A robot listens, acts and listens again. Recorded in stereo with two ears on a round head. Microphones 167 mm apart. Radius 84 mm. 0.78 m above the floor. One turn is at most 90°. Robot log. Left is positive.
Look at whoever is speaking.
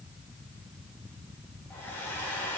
cmd idle
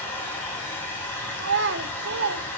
note: The child speaking: about 65° right or 115° right.
cmd yaw -65
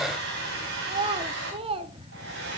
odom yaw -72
note: So it is at 30° right.
cmd yaw -30
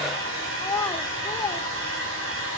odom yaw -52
note: The child speaking is now 20° left.
cmd yaw +20
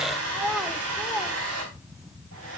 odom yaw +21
end: Found it: a child speaking, straight ahead, 1 to 2 m away.